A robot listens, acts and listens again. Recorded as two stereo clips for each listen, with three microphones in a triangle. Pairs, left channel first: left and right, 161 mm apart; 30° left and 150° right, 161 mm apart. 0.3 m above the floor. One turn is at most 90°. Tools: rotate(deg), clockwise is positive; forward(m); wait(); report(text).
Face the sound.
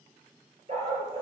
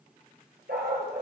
rotate(90)
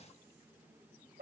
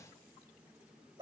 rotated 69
rotate(85)
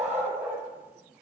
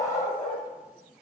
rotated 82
rotate(10)
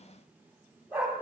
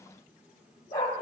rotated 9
rotate(10)
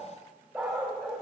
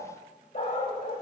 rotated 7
report("Found it: a dog barking, straight ahead.")